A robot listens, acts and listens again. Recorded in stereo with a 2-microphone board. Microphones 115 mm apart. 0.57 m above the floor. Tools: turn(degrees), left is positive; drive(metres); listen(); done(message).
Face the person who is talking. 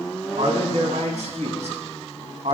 turn(degrees=-90)
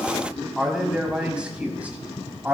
turn(degrees=-20)
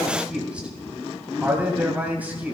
turn(degrees=-15)
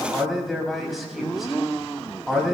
done("Found it: a man speaking, straight ahead.")